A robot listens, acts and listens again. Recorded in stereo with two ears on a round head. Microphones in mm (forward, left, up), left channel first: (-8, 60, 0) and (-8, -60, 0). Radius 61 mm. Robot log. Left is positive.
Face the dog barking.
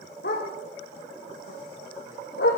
cmd yaw +90
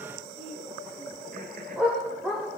end: Facing the dog barking.